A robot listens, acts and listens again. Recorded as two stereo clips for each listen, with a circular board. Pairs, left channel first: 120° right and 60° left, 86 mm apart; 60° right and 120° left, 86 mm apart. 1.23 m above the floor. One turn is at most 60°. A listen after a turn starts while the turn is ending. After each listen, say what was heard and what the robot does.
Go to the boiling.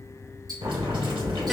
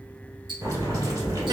The boiling: 70° left. Turn 60° left.
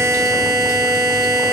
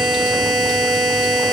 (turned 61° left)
Nothing new. It was at 10° left. Turn 10° left.
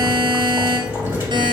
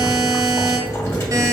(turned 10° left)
Drive 1.0 m forward.
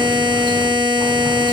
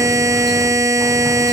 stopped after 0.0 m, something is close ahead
Keep listening.
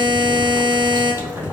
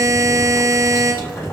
Blocked. The boiling is further on, straight ahead.